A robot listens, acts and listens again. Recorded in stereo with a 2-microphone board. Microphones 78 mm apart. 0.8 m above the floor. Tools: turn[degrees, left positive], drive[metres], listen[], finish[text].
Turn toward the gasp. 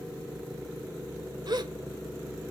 Thought: The gasp: about 60° right or 120° right.
Action: turn[-60]
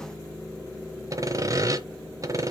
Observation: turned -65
Action: listen[]
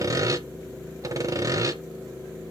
Action: finish[I heard a gasp, but can't make it out now. It was about 5° left or 55° right.]